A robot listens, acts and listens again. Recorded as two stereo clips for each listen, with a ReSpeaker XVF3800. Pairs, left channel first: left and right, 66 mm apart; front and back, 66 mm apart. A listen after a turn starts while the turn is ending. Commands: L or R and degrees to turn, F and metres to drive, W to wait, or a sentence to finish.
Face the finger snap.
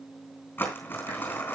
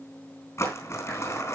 W
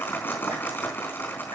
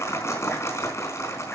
W
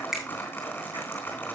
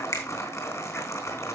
R10
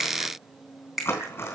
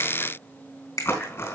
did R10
Found it: a finger snap, straight ahead, 2 to 4 m away.